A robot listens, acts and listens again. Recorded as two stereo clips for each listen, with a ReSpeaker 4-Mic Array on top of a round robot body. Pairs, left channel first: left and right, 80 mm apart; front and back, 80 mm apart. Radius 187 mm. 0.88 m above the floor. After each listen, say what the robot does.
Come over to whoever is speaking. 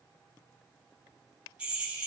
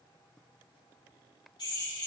Keep listening.
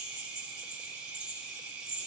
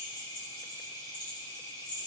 Keep listening.
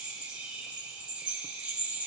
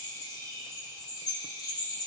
I can't make out anyone speaking to turn to.